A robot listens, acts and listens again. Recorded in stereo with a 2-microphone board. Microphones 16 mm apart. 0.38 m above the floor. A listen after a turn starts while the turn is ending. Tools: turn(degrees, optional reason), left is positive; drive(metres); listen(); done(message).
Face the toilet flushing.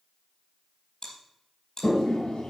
turn(degrees=70, reason="The toilet flushing: about 70° left or 110° left.")
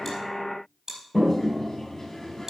turn(degrees=25, reason="So it is at 25° left.")
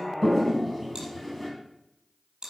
done("Found it: a toilet flushing, straight ahead.")